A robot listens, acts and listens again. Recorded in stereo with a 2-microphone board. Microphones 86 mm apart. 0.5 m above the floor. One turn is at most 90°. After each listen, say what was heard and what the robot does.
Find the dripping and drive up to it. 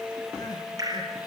The dripping: about 50° right or 130° right. Turn 50° right.
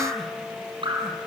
So it is at 85° right. Turn 85° right.
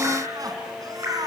The dripping is now 30° right. Turn 30° right.
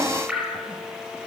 The dripping is now 10° right. Turn 10° right.
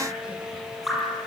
Drive 1.0 m forward.
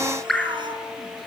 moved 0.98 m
Drive 1.0 m forward.
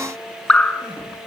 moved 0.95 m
The dripping is now 10° left. Turn 10° left.
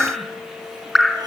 Drive 1.0 m forward.
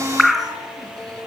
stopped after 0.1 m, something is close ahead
Arrived at the dripping, straight ahead.